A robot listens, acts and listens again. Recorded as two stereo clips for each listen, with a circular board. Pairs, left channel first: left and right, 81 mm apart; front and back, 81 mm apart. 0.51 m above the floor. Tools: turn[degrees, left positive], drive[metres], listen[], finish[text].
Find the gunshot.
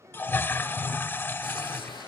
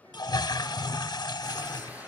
Thought: The gunshot: 110° left.
Action: turn[110]
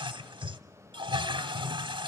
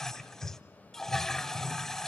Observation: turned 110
Action: finish[I heard a gunshot from this way, but can't make it out now.]